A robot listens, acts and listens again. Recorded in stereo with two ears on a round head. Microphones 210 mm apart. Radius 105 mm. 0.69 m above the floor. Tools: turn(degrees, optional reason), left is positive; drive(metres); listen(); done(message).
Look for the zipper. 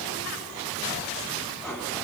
listen()
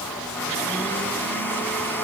listen()
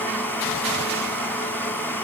done("I can't make out a zipper, only a blender.")